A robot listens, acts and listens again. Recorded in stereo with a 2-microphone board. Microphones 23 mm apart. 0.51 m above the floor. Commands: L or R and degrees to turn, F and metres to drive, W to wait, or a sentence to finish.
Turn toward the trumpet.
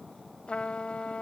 L60
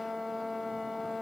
Facing the trumpet.